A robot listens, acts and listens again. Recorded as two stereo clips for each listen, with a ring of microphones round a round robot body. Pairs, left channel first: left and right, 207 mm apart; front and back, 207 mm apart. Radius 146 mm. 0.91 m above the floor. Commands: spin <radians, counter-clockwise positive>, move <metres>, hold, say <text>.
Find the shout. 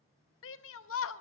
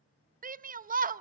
spin 2.27
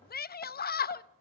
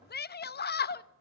spin 0.79
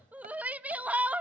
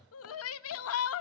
say Found it: a shout, straight ahead, under 1 m away.